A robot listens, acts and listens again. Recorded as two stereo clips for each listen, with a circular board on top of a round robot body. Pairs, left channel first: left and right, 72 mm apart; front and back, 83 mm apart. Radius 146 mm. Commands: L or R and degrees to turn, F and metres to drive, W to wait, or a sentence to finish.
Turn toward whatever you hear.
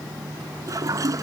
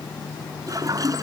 R135
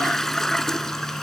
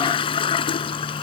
Facing the toilet flushing.